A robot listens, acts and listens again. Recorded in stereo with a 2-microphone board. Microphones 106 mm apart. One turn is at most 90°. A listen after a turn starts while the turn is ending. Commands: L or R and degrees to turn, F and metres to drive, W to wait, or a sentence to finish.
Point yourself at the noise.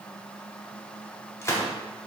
L25
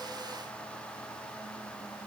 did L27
W
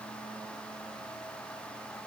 I heard a gunshot, but can't make it out now. It was about 5° right or 130° left.